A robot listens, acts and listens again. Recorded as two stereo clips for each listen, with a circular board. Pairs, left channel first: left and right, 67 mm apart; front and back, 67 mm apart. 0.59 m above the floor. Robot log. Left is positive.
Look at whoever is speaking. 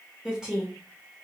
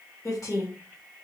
note: The woman speaking: 15° right.
cmd yaw -15
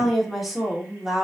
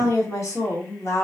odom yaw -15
note: The woman speaking is now 10° right.
cmd yaw -10
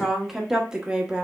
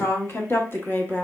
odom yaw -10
note: The woman speaking is now 30° right.
cmd yaw -30
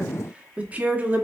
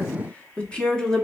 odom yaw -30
note: The woman speaking is now 70° right.
cmd yaw -70
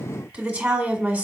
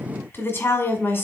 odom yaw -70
note: The woman speaking is now 25° right.
cmd yaw -25
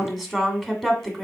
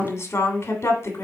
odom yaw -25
end: Facing the woman speaking, 1 to 2 m away.